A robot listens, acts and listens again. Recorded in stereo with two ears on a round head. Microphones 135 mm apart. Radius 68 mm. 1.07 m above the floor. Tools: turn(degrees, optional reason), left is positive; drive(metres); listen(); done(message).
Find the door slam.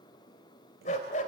listen()
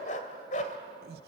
listen()
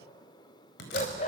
turn(degrees=90)
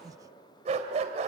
done("I heard a door slam from this way, but can't make it out now.")